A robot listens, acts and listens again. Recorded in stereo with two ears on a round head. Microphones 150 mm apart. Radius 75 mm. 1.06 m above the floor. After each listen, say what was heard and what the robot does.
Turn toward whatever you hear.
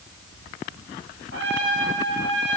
The trumpet: about 70° right or 110° right. Turn 70° right.
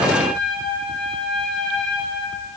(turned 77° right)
Facing the trumpet.